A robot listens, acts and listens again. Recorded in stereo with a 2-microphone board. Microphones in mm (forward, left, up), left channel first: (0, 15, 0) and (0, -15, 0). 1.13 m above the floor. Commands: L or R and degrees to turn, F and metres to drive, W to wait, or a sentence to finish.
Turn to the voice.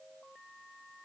W
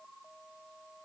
W
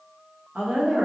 R50
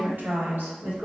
R80
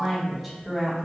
Found it: a woman speaking, straight ahead, 1 to 2 m away.